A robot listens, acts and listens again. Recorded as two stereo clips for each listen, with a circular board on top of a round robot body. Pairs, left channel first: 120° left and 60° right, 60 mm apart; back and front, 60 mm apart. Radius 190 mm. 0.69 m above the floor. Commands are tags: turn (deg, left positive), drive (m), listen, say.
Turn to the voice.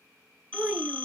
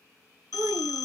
<turn deg="20"/>
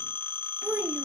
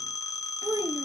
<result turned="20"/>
<say>Facing the child speaking, under 1 m away.</say>